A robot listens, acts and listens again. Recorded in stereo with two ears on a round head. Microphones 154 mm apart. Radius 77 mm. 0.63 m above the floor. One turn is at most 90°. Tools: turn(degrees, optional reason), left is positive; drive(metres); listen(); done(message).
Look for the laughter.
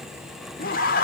turn(degrees=55, reason="The laughter: about 55° left or 125° left.")
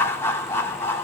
turn(degrees=15, reason="So it is at 15° left.")
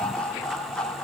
done("Facing the laughter.")